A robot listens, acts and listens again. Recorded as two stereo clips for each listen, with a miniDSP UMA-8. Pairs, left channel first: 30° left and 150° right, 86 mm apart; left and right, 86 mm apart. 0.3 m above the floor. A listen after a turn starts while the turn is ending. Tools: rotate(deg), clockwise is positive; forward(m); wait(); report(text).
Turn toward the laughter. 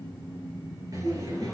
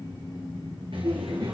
rotate(105)
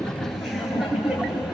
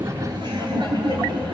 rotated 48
rotate(70)
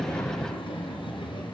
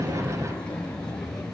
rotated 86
report("Facing the laughter, over 4 m away.")